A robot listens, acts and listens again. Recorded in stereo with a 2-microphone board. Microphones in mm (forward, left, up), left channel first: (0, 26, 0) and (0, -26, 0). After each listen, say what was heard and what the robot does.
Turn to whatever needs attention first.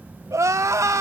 Turn 90° right.
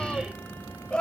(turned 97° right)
So it is at 20° left. Turn 20° left.
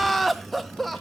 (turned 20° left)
Facing the crying, 1 to 2 m away.